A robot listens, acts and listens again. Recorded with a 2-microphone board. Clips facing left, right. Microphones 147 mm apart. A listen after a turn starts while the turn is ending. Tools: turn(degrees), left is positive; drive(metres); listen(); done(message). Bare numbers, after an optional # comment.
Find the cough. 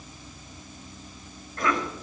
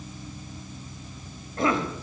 # The cough: about 30° right or 150° right.
turn(-30)
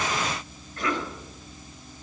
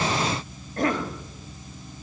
# So it is at 120° right.
turn(-120)
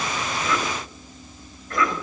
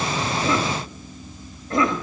# The cough is now 30° right.
turn(-30)
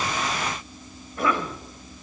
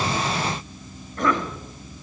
# The cough is now 10° left.
turn(10)
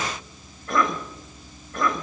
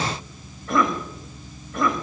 done("Found it: a cough, straight ahead.")